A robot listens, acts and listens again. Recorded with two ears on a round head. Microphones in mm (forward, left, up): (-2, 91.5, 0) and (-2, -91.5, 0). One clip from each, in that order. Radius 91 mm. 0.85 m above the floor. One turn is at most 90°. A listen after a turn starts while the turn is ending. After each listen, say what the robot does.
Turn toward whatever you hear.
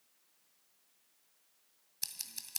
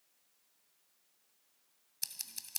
Turn 30° right.
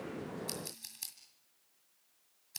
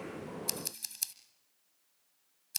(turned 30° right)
Turn 90° right.
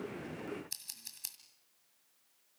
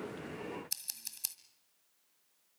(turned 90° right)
Turn 20° right.
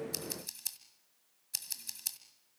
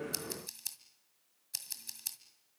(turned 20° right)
Found it: scissors, straight ahead.